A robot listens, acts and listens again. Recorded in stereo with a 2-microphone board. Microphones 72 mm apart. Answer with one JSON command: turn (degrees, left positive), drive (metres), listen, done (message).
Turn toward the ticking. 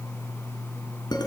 {"listen": true}
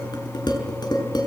{"listen": true}
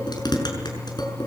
{"done": "I can't make out ticking, only dishes clattering."}